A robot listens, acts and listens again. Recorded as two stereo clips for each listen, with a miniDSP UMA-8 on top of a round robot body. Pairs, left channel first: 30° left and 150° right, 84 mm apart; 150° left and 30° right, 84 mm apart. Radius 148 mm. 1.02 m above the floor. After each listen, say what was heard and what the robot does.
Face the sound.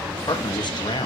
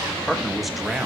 The man speaking: 55° left. Turn 55° left.
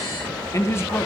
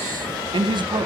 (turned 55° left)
The man speaking is now 35° right. Turn 35° right.
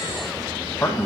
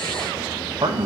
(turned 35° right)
The man speaking is now 35° right. Turn 35° right.
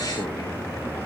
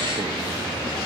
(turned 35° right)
Keep listening.
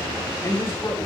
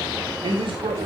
The man speaking is now 35° right. Turn 35° right.
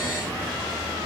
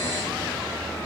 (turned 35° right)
Keep listening.
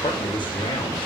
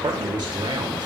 Found it: a man speaking, straight ahead, 2 to 4 m away.